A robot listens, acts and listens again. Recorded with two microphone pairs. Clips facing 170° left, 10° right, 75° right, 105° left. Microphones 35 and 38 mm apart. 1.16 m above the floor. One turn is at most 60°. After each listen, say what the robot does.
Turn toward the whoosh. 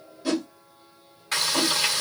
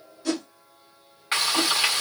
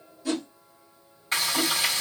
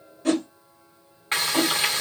Turn 60° left.
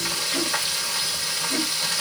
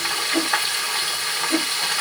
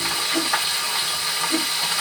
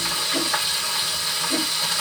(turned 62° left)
Turn 35° left.
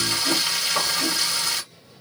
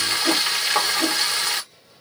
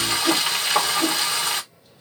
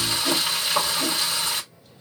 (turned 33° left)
Keep listening.
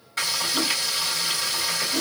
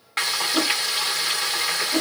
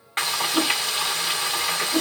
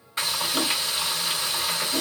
Facing the whoosh.